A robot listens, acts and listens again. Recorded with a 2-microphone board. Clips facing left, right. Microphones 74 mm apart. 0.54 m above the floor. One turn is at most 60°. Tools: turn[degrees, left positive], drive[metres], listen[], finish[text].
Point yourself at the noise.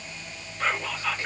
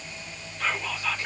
Thought: The whispering: about 35° left or 145° left.
Action: turn[35]
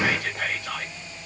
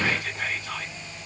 Thought: So it is at 105° left.
Action: turn[60]
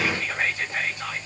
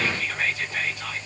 Thought: The whispering is now 40° left.
Action: turn[40]
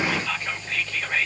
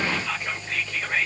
Action: finish[Found it: whispering, straight ahead, 2 to 4 m away.]